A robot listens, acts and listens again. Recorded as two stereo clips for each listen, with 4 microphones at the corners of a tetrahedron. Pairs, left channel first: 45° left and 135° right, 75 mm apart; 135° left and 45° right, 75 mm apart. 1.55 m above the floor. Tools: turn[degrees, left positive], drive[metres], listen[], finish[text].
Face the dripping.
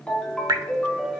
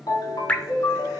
Thought: The dripping: 155° right.
Action: turn[-155]
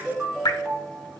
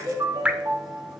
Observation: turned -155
Thought: The dripping is now 25° left.
Action: turn[25]
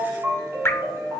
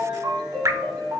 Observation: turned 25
Thought: The dripping is now 10° right.
Action: turn[-10]
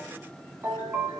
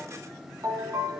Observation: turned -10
Action: listen[]
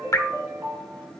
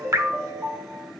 Action: finish[Found it: dripping, straight ahead, under 1 m away.]